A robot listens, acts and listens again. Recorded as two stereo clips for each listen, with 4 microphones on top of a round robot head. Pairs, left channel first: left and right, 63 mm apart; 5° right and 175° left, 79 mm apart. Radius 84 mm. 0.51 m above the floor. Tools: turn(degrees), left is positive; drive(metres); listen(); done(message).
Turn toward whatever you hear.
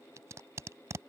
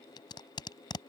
turn(degrees=-40)
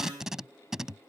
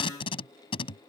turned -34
done("Facing the tape being pulled.")